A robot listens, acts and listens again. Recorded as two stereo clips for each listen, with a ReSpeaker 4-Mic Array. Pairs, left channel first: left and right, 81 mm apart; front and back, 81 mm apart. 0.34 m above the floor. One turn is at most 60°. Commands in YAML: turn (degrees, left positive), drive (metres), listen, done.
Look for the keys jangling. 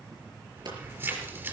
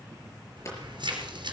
turn: -60
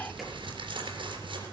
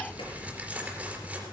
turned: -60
turn: -60
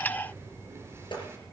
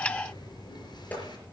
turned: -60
turn: -30
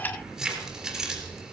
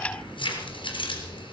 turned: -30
done: "Facing the keys jangling, 2 to 4 m away."